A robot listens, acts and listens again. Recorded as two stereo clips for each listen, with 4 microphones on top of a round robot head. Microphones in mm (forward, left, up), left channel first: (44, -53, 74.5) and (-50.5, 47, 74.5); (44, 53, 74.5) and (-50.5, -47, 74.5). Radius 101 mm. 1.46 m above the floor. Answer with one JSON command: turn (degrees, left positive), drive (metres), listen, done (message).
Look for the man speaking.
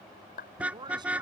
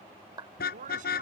{"turn": -165}
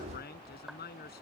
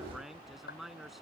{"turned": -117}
{"turn": -45}
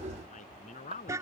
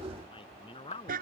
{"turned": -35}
{"turn": -10}
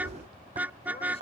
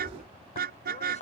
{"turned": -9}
{"listen": true}
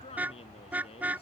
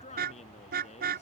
{"done": "Found it: a man speaking, straight ahead."}